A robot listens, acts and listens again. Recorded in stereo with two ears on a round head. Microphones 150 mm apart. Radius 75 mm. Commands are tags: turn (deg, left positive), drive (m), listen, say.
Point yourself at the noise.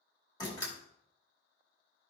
<turn deg="25"/>
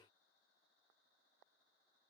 <listen/>
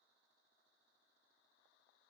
<say>I heard a door slam, but can't make it out now. It was about straight ahead or 130° left.</say>